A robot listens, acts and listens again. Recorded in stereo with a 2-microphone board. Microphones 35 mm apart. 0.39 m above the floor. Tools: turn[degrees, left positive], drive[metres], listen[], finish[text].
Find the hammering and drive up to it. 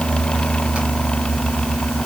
Action: listen[]
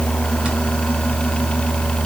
Action: listen[]
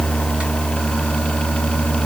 Action: finish[I can't make out hammering to turn to.]